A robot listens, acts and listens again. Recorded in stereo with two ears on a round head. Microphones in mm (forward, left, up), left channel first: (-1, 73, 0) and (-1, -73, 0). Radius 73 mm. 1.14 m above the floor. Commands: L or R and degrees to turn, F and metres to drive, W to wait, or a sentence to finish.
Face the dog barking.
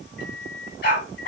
L60
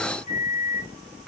Found it: a dog barking, straight ahead, 2 to 4 m away.